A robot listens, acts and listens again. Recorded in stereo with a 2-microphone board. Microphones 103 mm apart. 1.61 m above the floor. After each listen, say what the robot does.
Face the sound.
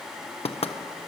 Turn 70° left.
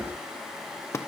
Turn 30° left.
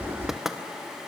Found it: knocking, straight ahead, 1 to 2 m away.